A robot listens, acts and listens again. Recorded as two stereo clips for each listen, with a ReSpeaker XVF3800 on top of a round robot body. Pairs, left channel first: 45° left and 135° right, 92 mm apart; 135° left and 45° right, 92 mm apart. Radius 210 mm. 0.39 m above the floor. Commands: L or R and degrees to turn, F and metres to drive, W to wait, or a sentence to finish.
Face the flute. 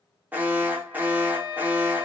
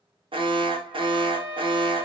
Facing the flute.